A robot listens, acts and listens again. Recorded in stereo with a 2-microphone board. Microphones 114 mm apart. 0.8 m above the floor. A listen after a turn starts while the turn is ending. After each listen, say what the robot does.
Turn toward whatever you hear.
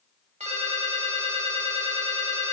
Turn 90° right.
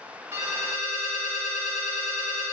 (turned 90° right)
Found it: a ringtone, straight ahead, 1 to 2 m away.